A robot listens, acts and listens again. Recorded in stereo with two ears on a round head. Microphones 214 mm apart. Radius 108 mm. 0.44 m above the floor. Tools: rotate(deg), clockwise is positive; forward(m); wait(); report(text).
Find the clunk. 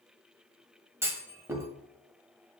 rotate(30)
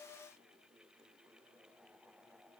wait()
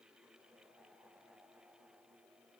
report("I heard a clunk, but can't make it out now. It was about 20° left or 140° right.")